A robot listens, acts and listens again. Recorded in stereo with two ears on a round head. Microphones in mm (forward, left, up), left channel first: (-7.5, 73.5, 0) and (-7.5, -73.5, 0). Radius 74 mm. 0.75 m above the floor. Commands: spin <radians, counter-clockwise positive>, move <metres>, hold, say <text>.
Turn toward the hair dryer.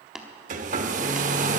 spin -0.79
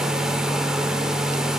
say Facing the hair dryer.